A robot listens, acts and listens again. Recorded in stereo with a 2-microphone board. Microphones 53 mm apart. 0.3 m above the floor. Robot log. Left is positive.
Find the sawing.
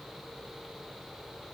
cmd idle
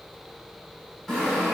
cmd yaw +30
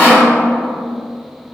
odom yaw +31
note: So it is at 140° left.
cmd yaw +140
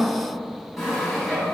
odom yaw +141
end: Facing the sawing, 1 to 2 m away.